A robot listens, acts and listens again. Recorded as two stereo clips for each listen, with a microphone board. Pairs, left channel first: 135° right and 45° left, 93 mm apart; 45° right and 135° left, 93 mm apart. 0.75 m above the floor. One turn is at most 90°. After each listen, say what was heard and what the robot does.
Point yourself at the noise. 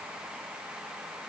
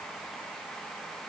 Keep listening.
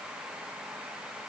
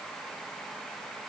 Keep listening.
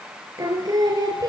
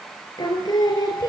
Facing the singing.